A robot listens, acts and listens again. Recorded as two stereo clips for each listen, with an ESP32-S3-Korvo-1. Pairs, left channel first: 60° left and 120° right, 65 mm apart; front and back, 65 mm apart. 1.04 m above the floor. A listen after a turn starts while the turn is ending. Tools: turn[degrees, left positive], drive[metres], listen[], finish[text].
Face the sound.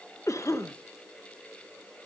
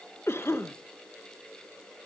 Thought: The cough: 40° left.
Action: turn[40]
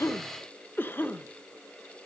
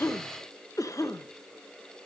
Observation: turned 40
Thought: The cough is now 10° left.
Action: turn[10]
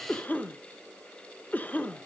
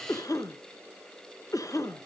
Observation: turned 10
Action: finish[Found it: a cough, straight ahead, under 1 m away.]